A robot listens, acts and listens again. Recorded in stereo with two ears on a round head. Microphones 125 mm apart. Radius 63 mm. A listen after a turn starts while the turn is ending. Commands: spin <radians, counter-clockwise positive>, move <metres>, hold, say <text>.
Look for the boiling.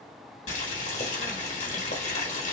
spin 0.87
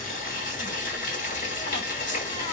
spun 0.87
spin 1.31
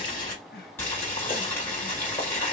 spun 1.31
spin 0.26
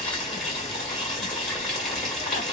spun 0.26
say Facing the boiling, 1 to 2 m away.